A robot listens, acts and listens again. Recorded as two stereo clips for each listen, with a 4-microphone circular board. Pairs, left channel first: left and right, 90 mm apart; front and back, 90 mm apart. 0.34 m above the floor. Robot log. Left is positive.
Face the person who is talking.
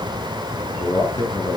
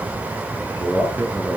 note: The man speaking: 120° left.
cmd yaw +120
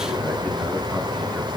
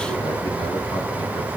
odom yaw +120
cmd idle
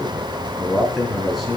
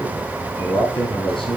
end: Facing the man speaking.